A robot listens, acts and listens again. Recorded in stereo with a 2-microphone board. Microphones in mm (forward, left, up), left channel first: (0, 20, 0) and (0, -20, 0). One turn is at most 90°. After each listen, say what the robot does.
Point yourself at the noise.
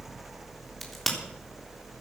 Turn 30° left.
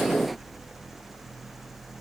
Keep listening.
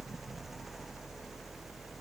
I heard a crack, but can't make it out now. It was about 25° right or 145° left.